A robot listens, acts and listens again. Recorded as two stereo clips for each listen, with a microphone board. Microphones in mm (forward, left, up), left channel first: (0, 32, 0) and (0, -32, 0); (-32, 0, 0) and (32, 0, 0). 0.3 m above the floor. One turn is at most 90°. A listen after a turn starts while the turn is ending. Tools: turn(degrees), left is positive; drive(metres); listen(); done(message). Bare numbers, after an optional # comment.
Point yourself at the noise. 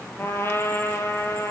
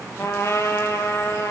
# The trumpet: 140° left.
turn(90)
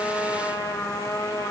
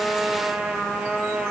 # The trumpet is now 80° left.
turn(80)
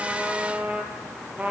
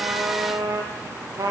# The trumpet is now 20° right.
turn(-20)
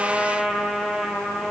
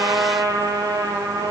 done("Facing the trumpet.")